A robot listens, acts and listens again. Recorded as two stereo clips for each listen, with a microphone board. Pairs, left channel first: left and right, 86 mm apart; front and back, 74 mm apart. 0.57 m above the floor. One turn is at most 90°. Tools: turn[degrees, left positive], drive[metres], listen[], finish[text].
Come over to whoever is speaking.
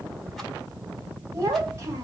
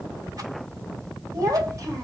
Thought: The child speaking: 145° right.
Action: turn[-90]
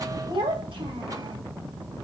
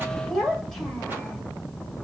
Thought: The child speaking is now 85° right.
Action: turn[-85]
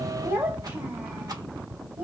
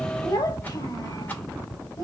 Thought: The child speaking is now 25° right.
Action: turn[-25]
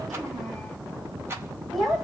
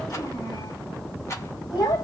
Action: drive[1.0]
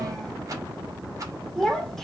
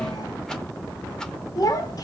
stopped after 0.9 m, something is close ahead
Action: finish[Arrived at the child speaking, straight ahead.]